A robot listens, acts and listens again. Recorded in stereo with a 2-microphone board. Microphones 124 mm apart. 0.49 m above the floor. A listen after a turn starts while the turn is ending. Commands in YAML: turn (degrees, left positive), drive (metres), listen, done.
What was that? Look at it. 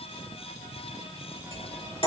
turn: 45
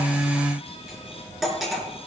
done: "Facing the cutlery clinking, over 4 m away."